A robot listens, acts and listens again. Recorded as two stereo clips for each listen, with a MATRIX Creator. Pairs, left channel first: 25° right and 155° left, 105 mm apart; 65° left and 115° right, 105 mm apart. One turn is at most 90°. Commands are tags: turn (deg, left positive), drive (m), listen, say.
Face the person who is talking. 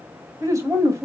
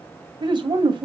<turn deg="-90"/>
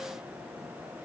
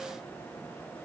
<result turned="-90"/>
<turn deg="-55"/>
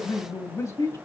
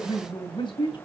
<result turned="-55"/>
<turn deg="35"/>
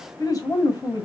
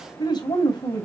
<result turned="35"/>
<turn deg="25"/>
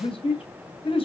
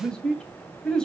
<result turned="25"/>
<turn deg="-15"/>
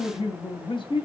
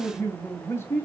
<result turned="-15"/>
<say>Facing the man speaking.</say>